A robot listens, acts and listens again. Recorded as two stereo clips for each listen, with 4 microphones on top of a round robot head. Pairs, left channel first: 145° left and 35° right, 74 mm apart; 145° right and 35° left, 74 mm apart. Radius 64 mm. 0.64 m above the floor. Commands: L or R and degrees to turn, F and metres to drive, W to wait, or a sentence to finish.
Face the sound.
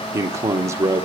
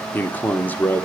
R80
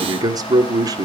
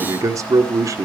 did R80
Facing the man speaking.